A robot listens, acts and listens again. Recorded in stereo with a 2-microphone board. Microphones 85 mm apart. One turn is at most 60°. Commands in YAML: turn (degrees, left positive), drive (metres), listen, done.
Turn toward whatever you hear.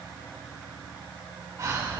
turn: -45
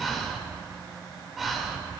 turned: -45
done: "Found it: breathing, straight ahead, 2 to 4 m away."